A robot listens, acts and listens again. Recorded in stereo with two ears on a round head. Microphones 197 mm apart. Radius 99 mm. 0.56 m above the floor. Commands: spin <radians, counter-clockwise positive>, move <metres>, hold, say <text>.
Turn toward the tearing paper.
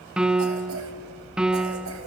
hold
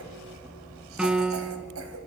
hold
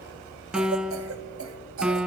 say I can't make out tearing paper, only a cough and a piano.